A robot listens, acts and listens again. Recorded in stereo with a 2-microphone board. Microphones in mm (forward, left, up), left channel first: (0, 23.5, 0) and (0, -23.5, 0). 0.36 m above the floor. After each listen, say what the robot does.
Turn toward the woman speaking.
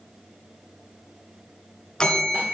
Keep listening.
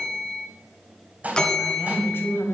Turn 55° left.
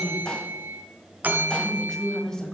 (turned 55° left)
Turn 15° left.
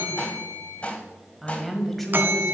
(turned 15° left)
Facing the woman speaking, 1 to 2 m away.